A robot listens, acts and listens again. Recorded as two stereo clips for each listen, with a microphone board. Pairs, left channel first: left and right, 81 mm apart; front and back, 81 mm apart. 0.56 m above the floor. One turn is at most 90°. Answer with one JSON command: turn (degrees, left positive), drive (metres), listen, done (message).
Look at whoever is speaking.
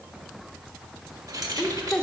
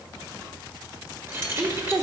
{"turn": 90}
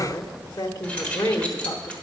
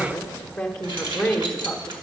{"turn": 75}
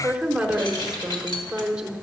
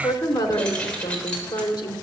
{"turn": -10}
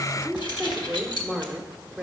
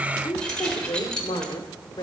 {"done": "Facing the woman speaking."}